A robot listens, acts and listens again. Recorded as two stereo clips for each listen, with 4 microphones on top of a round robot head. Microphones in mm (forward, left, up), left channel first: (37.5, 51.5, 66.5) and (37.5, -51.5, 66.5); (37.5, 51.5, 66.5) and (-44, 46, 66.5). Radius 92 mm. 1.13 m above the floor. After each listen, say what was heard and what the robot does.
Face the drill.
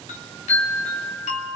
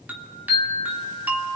Keep listening.
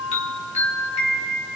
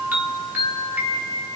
Keep listening.
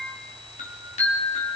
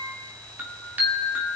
I can't make out a drill to turn to.